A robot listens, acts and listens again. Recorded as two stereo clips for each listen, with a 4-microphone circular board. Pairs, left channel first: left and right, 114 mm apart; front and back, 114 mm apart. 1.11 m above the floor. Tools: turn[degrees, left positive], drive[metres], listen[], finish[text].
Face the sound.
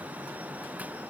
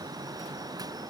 Action: listen[]
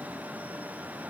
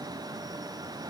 Action: listen[]
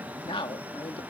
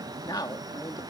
Thought: The man speaking: 50° left.
Action: turn[50]
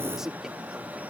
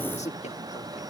Action: finish[Facing the man speaking.]